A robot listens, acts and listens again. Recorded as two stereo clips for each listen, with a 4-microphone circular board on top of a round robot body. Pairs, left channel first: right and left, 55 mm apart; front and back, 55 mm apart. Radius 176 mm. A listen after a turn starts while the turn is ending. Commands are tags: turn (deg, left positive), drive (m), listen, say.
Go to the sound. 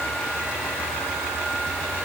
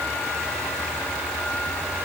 <listen/>
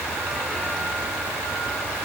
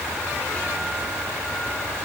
<listen/>
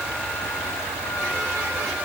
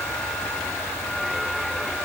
<say>I can't make out anything.</say>